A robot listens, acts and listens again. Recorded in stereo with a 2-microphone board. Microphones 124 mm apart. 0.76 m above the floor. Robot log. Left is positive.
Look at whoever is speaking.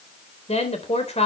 note: The woman speaking: about 60° left or 120° left.
cmd yaw +60
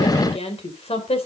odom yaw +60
note: So it is at 55° left.
cmd yaw +55
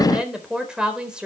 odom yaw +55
note: The woman speaking is now 10° right.
cmd yaw -10
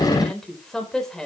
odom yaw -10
end: Found it: a woman speaking, straight ahead, 2 to 4 m away.